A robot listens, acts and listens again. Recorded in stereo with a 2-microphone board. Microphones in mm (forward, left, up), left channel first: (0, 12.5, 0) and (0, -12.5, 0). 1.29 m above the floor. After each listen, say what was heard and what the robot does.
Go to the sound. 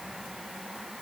Keep listening.
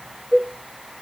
The cowbell: about 40° right or 140° right. Turn 40° right.
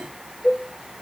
Drive 1.0 m forward.
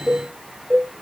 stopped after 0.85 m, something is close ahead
The cowbell is now 10° right. Turn 10° right.
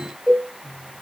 Arrived at the cowbell, straight ahead.